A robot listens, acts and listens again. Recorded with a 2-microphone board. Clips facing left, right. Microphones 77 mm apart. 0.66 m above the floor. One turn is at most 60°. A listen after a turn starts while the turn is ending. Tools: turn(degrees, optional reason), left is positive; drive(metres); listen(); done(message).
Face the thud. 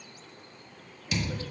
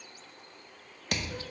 turn(degrees=-60, reason="The thud: about 65° right or 115° right.")
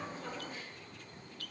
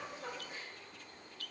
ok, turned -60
listen()
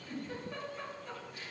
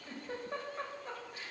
done("I heard a thud, but can't make it out now. It was about 5° right or 55° right.")